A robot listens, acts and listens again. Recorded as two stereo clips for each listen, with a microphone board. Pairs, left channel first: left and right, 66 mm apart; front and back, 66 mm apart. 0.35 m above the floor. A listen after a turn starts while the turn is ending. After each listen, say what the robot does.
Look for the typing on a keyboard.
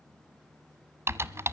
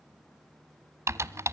Turn 135° right.
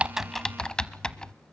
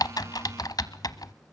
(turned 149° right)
Turn 15° left.
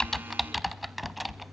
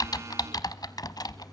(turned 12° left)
Facing the typing on a keyboard, under 1 m away.